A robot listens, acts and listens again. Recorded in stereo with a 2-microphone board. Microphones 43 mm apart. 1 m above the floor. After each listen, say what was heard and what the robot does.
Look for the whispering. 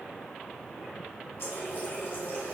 Keep listening.
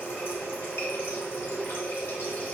Keep listening.
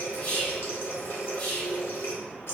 The whispering: about 45° left or 135° left. Turn 45° left.
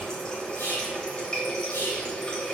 So it is at 85° left. Turn 85° left.
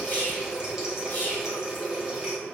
The whispering is now 45° left. Turn 45° left.
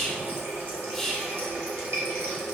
Facing the whispering, 1 to 2 m away.